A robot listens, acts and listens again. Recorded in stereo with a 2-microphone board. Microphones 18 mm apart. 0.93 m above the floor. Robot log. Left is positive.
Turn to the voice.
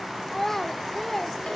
note: The child speaking: about 20° left or 160° left.
cmd yaw +20
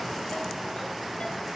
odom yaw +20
cmd idle
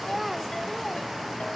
cmd idle
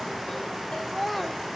end: Facing the child speaking, 1 to 2 m away.